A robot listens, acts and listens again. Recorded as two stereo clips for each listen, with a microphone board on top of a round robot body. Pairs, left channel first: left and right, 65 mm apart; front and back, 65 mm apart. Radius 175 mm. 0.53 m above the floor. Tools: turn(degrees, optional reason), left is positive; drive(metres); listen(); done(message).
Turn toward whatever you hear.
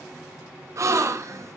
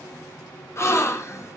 turn(degrees=-50, reason="The gasp: 50° right.")
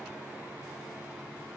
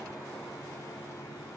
done("I heard a gasp from this way, but can't make it out now.")